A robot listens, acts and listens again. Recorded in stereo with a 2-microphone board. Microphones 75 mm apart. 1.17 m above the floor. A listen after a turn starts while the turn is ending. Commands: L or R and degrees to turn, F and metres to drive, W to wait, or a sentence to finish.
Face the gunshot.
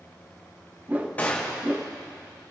L20
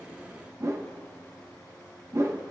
W
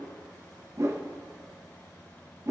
I heard a gunshot, but can't make it out now. It was about straight ahead or 140° left.